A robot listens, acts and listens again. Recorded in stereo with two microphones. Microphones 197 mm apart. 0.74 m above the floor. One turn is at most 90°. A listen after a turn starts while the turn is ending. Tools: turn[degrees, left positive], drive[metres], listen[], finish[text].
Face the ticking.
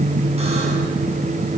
Action: listen[]
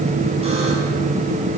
Action: listen[]
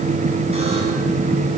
Action: finish[I can't make out ticking.]